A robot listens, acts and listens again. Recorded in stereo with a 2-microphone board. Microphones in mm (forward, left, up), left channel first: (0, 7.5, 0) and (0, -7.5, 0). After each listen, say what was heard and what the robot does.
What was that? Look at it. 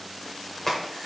The crack: about 25° left or 155° left. Turn 25° left.
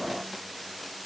Keep listening.
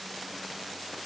I heard a crack, but can't make it out now. It was about straight ahead or 130° left.